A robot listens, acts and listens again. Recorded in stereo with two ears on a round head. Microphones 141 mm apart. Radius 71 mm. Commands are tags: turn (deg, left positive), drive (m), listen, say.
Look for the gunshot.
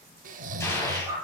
<turn deg="20"/>
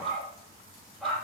<listen/>
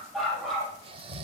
<say>I heard a gunshot, but can't make it out now. It was about straight ahead or 140° left.</say>